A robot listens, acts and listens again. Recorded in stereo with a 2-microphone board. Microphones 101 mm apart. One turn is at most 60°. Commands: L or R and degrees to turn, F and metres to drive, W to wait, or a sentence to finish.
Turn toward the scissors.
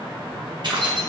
W
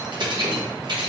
W
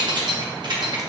I can't make out scissors, only keys jangling.